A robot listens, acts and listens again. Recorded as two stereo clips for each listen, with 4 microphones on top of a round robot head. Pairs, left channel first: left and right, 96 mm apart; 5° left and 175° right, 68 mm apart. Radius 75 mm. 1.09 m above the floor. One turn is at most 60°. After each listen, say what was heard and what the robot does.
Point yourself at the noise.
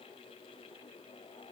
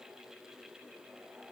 Keep listening.
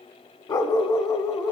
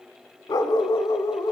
The dog barking: 40° left. Turn 40° left.
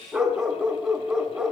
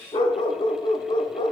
Found it: a dog barking, straight ahead, 1 to 2 m away.